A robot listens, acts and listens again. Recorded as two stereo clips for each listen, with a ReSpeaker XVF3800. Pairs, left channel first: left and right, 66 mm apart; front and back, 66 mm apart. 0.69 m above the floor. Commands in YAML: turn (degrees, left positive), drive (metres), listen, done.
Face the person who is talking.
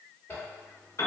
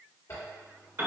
listen: true
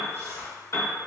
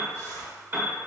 listen: true
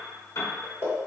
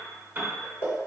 done: "I can't make out anyone speaking, only a zipper and a piano."